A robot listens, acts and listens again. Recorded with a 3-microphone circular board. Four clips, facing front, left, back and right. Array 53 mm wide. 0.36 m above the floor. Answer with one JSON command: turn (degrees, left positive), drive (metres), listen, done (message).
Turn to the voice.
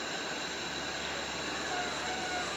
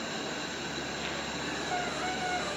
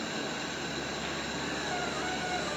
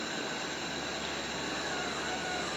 {"listen": true}
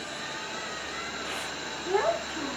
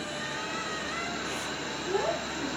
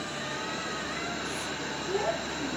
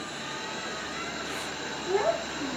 {"turn": -10}
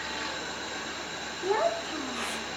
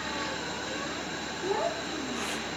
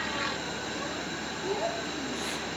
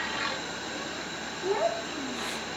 {"done": "Facing the child speaking, 2 to 4 m away."}